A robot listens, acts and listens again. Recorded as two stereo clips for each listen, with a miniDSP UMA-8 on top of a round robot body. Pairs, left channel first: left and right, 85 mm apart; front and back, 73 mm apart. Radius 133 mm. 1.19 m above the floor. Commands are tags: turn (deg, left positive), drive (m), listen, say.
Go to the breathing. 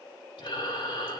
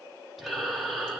<turn deg="90"/>
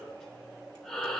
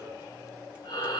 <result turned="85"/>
<drive m="1.0"/>
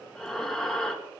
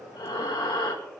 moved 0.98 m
<drive m="1.0"/>
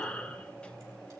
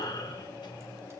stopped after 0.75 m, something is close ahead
<turn deg="15"/>
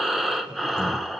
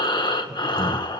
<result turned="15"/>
<say>I am next to the breathing.</say>